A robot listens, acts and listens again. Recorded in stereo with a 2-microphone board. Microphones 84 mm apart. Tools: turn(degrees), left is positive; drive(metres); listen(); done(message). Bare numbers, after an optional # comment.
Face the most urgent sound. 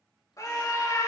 # The scream: about 40° left or 140° left.
turn(40)
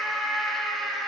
done("Found it: a scream, straight ahead, 2 to 4 m away.")